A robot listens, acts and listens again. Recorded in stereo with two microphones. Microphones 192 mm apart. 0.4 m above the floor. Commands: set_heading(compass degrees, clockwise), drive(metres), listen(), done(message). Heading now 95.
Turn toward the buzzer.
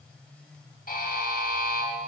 set_heading(45)
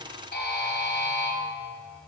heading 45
set_heading(335)
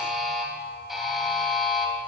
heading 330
done("Facing the buzzer, 2 to 4 m away.")